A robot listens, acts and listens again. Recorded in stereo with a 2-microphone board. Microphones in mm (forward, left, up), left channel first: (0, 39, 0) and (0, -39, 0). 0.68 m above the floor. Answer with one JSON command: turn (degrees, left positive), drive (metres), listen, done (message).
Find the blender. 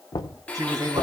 {"turn": 15}
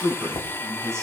{"turn": 155}
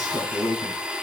{"turn": -15}
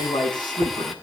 {"done": "Facing the blender."}